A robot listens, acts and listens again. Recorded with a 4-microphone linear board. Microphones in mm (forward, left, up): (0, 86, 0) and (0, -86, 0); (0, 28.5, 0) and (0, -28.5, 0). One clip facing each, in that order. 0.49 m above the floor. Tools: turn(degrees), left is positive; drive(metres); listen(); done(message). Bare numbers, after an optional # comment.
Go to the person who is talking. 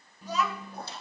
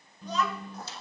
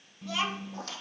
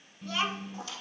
turn(30)
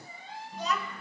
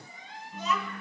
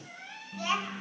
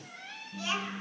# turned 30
# So it is at 140° left.
turn(140)
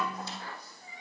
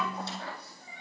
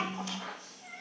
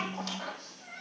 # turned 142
drive(1.0)
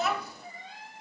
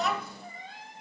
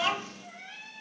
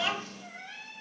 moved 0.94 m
drive(1.0)
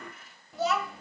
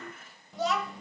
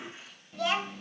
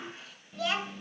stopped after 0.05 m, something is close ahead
done("I am next to the child speaking.")